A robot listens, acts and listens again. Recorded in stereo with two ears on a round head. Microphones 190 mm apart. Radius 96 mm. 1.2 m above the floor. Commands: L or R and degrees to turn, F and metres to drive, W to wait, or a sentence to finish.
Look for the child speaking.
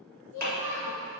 L90
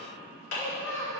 L15
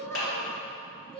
L25
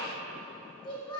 L25
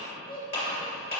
L20
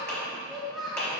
Facing the child speaking, 1 to 2 m away.